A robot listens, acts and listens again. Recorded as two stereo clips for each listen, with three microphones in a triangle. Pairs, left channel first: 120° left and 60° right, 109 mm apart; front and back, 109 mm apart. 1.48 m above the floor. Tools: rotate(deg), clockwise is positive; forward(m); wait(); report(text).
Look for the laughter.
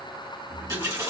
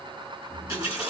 wait()
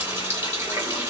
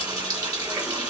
wait()
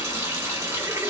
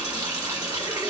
report("I can't make out laughter to turn to.")